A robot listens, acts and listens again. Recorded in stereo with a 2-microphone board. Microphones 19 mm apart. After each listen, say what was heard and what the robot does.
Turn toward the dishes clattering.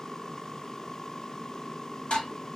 The dishes clattering: about 65° left or 115° left. Turn 65° left.
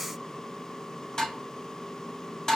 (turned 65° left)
So it is at 35° left. Turn 35° left.
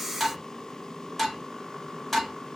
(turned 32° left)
Facing the dishes clattering, 1 to 2 m away.